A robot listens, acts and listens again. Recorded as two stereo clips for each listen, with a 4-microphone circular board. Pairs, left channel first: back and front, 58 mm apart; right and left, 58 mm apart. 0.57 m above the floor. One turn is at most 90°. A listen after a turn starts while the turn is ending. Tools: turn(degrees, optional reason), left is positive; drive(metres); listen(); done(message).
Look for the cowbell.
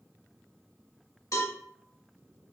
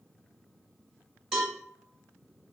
turn(degrees=90, reason="The cowbell: 170° left.")
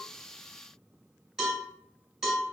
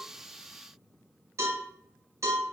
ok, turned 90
turn(degrees=80, reason="The cowbell is now 80° left.")
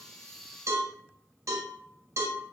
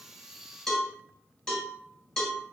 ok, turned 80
done("Found it: a cowbell, straight ahead.")